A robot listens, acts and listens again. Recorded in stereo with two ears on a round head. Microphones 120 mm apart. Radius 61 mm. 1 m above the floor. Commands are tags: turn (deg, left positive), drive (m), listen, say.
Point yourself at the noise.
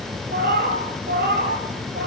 <turn deg="-70"/>
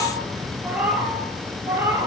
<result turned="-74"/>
<turn deg="-15"/>
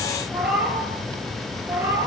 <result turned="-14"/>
<turn deg="-15"/>
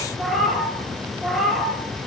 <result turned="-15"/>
<say>Found it: a cat meowing, straight ahead, 2 to 4 m away.</say>